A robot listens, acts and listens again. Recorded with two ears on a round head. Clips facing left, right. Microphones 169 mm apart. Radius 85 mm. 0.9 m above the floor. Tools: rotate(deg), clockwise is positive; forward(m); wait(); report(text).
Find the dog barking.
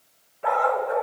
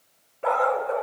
rotate(45)
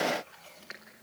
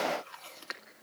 wait()
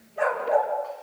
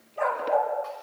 rotate(-10)
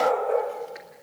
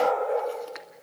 report("Facing the dog barking, over 4 m away.")